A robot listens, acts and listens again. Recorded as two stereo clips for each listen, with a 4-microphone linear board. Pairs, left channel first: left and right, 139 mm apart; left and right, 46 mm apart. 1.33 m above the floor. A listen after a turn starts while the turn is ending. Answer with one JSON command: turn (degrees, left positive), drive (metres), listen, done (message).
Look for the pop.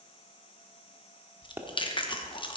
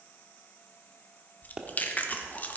{"turn": -15}
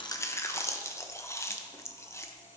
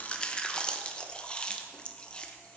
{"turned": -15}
{"listen": true}
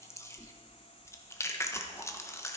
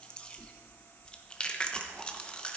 {"done": "I heard a pop, but can't make it out now. It was about straight ahead or 150° right."}